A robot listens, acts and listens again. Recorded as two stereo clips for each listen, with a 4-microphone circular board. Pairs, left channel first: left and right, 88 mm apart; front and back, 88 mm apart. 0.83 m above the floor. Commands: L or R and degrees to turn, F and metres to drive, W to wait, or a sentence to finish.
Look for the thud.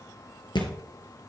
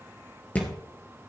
L70
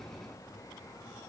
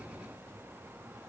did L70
I heard a thud from this way, but can't make it out now.